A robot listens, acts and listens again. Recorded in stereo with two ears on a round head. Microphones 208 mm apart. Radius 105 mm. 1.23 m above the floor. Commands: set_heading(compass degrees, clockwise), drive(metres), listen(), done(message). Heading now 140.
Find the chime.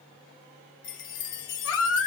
set_heading(90)
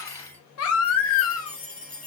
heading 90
done("Facing the chime.")